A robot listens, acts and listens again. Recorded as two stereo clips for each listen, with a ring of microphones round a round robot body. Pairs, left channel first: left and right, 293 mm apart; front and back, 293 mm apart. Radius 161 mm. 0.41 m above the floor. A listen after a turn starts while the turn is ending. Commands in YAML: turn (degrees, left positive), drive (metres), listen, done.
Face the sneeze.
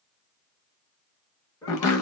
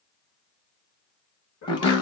turn: 15
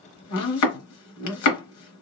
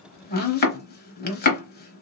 done: "Facing where the sneeze came from. I can't hear it now."